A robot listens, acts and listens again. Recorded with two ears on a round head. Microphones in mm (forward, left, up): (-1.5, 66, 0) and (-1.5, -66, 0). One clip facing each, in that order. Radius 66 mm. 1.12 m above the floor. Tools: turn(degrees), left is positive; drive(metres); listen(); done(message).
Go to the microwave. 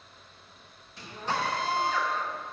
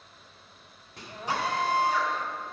turn(degrees=-50)
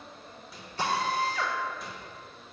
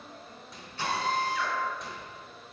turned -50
drive(metres=1.0)
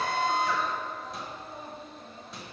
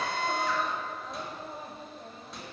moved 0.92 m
drive(metres=1.0)
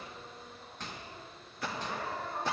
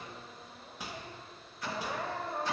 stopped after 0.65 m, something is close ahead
turn(degrees=-10)
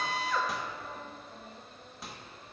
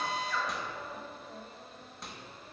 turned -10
done("Arrived at the microwave, straight ahead.")